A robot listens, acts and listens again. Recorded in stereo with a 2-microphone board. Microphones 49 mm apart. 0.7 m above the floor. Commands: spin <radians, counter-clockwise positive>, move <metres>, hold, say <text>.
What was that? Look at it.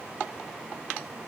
hold
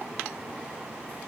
hold
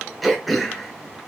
spin 0.52
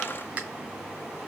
spin -0.44
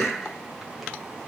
say Facing the throat clearing, under 1 m away.